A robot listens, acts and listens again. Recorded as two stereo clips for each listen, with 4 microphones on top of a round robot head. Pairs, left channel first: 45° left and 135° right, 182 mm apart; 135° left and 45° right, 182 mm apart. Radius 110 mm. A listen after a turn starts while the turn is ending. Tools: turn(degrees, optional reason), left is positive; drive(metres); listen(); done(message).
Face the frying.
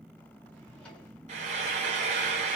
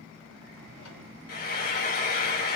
turn(degrees=170, reason="The frying: 170° left.")
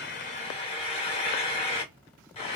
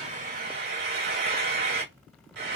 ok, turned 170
turn(degrees=-15, reason="The frying is now 15° right.")
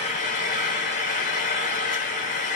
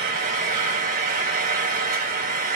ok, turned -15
done("Found it: frying, straight ahead, 1 to 2 m away.")